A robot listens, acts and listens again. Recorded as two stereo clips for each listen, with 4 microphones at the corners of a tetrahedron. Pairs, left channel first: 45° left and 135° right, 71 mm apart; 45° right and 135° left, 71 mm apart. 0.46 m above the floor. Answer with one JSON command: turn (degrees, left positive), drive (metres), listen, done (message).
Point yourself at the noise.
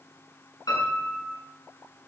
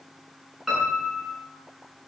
{"turn": 45}
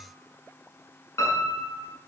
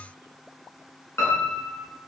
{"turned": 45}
{"done": "Found it: a piano, straight ahead, over 4 m away."}